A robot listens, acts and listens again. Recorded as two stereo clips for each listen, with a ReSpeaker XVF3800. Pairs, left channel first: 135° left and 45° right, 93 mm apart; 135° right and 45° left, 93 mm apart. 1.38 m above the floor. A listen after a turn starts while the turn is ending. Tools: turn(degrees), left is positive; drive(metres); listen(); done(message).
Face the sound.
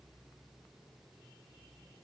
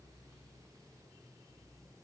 listen()
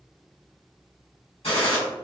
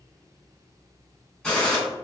turn(degrees=140)
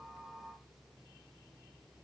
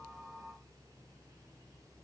done("I heard a gunshot from this way, but can't make it out now.")